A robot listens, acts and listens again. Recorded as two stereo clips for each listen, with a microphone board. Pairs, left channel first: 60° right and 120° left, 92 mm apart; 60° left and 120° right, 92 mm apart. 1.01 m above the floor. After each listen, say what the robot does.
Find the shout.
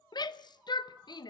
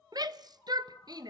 Turn 85° right.
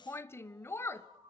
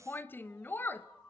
Found it: a shout, straight ahead.